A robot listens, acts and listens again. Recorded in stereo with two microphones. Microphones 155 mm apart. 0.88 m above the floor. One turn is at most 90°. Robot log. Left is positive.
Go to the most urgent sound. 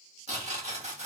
cmd idle
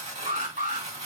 note: The alarm: about 60° right or 120° right.
cmd yaw -60
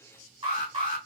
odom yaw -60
note: So it is at 35° right.
cmd yaw -35
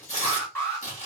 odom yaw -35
note: The alarm is now 15° left.
cmd yaw +15
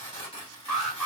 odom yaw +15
cmd fwd 1.0
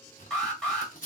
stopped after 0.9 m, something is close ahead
end: I am next to the alarm.